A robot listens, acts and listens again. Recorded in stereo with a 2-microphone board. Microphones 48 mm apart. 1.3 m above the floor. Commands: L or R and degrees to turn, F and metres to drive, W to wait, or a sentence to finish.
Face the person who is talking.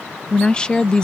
L20
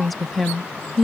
Facing the woman speaking.